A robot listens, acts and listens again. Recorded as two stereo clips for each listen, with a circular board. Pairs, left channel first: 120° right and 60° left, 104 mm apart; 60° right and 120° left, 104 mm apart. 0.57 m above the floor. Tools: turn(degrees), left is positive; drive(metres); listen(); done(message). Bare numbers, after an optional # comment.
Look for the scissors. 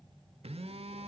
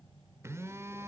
listen()
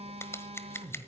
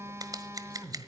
# The scissors: 175° left.
turn(175)
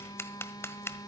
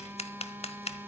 # The scissors is now 55° right.
turn(-55)
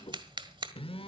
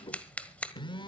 # The scissors is now 20° left.
turn(20)
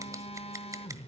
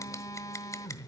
listen()
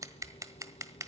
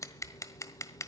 done("Facing the scissors.")